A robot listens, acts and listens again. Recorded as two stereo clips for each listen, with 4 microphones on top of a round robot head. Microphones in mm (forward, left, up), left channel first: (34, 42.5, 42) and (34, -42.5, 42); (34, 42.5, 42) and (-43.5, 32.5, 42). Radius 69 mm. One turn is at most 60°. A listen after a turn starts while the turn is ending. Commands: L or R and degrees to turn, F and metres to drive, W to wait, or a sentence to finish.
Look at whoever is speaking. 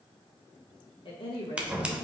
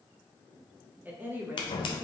L60
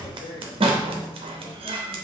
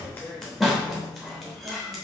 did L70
L55
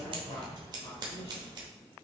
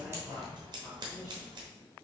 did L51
W
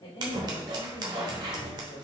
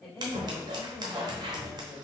L60
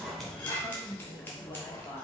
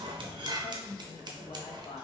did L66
L30
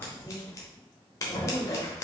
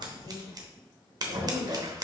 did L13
L15
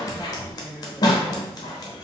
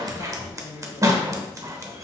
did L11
Facing the woman speaking.